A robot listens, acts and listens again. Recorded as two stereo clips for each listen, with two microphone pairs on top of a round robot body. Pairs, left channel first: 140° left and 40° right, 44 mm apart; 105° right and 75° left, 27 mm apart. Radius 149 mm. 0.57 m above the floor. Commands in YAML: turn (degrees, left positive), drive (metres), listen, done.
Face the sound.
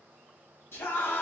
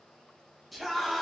turn: 160
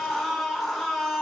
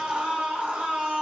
turn: 55
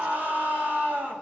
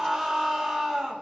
done: "Facing the scream."